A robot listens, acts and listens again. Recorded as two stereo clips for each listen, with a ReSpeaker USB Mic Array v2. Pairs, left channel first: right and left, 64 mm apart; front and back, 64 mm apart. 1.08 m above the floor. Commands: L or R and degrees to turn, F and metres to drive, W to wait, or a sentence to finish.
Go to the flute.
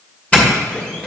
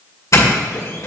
W
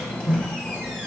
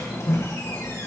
W
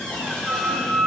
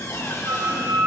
R175
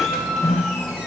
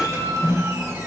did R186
L10
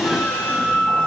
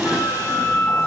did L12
F1.0
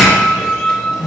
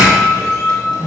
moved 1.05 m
F1.0
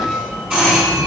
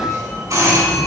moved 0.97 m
W
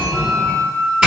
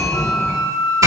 R15
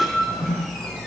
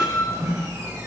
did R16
F1.0
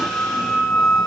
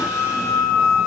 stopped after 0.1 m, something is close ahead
Arrived at the flute, straight ahead.